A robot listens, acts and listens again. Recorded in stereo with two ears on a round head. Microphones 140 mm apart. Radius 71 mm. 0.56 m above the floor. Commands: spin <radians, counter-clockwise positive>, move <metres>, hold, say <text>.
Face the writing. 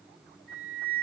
hold
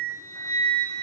hold
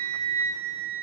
say I can't make out writing to turn to.